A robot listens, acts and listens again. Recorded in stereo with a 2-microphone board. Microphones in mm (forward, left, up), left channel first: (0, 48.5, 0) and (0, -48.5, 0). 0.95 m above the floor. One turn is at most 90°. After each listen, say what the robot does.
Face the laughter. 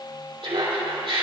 Turn 90° right.
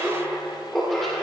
Found it: laughter, straight ahead, 2 to 4 m away.